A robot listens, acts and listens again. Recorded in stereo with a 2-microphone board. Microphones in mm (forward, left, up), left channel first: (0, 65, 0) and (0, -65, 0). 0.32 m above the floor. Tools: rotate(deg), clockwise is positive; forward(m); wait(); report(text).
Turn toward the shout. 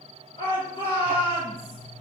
rotate(-45)
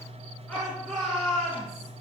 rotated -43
report("Facing the shout, 2 to 4 m away.")